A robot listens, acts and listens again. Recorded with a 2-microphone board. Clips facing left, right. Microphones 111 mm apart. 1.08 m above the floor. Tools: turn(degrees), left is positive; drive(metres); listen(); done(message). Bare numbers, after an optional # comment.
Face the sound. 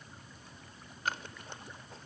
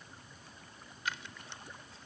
# The scissors: about 45° left or 135° left.
turn(45)
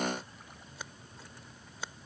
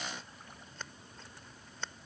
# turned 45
# So it is at 10° left.
turn(10)
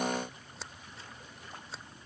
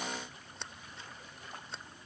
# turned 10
done("Facing the scissors.")